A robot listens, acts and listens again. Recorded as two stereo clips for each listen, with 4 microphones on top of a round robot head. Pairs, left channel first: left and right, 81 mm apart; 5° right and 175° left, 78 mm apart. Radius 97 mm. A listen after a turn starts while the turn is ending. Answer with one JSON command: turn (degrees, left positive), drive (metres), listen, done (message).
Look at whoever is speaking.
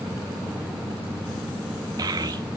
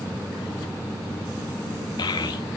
{"turn": -40}
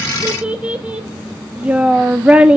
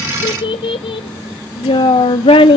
{"turn": -15}
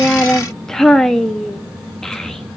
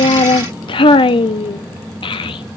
{"done": "Found it: a child speaking, straight ahead, under 1 m away."}